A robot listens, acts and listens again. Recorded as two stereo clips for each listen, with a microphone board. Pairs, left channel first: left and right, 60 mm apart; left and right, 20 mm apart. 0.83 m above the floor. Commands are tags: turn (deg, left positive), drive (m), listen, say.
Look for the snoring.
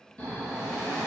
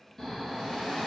<turn deg="25"/>
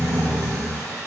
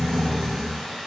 <turn deg="125"/>
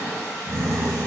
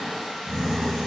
<turn deg="10"/>
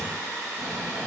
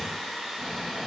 <say>Found it: snoring, straight ahead.</say>